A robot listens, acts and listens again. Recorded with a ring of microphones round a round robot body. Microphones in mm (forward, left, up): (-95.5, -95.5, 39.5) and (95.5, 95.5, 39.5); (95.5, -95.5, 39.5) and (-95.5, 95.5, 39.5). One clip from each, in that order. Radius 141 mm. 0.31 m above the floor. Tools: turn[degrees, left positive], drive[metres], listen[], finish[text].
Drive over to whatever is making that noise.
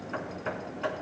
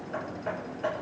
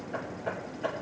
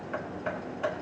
Thought: The hammering: 175° left.
Action: turn[175]
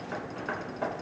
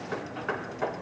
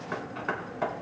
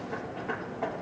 Thought: The hammering is now 35° right.
Action: turn[-35]
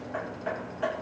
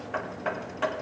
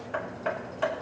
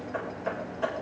Action: drive[1.0]
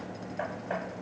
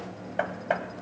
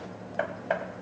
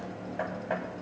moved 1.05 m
Thought: The hammering is now 15° left.
Action: turn[15]
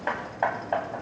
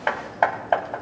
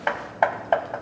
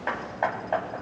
Action: drive[1.0]
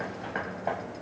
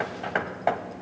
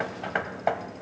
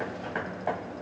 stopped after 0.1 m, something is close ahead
Action: finish[I am next to the hammering.]